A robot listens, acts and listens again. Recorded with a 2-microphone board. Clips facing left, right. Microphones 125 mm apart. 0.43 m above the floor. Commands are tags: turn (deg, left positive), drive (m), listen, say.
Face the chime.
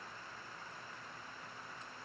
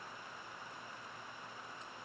<listen/>
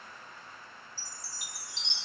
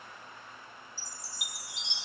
<turn deg="-30"/>
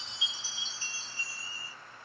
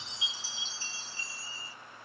<turn deg="20"/>
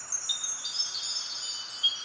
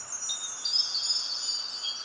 <say>Found it: a chime, straight ahead, 1 to 2 m away.</say>